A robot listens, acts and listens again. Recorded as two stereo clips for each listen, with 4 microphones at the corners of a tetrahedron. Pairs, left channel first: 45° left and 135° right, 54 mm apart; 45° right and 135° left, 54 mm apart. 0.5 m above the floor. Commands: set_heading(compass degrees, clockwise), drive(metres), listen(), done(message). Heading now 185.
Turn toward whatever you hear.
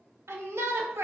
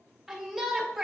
set_heading(325)
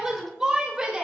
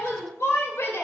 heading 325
set_heading(25)
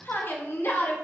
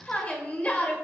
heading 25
set_heading(10)
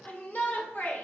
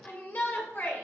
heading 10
done("Facing the shout, 1 to 2 m away.")